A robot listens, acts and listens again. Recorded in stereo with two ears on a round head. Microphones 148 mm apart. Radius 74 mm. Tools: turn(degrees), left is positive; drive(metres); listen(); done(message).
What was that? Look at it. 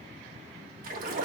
turn(degrees=-55)
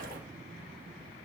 listen()
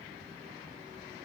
done("I heard a splash, but can't make it out now. It was about straight ahead or 70° right.")